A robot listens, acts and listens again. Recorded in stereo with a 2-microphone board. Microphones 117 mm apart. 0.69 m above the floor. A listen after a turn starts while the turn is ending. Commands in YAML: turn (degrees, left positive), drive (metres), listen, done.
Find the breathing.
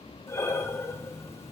turn: 20
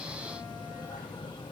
listen: true
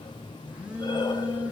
listen: true
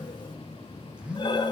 turn: 140
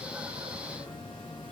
listen: true
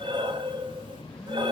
turn: -45
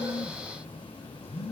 listen: true
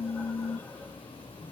listen: true
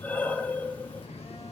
turn: 15
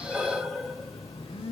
done: "Found it: breathing, straight ahead."